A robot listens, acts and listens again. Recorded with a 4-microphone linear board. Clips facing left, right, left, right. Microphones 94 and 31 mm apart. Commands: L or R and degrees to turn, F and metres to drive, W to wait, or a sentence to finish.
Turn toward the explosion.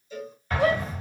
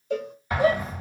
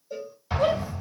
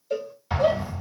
R30
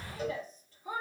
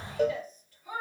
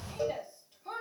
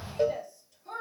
R140
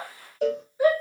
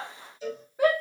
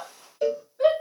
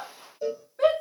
I heard an explosion from this way, but can't make it out now.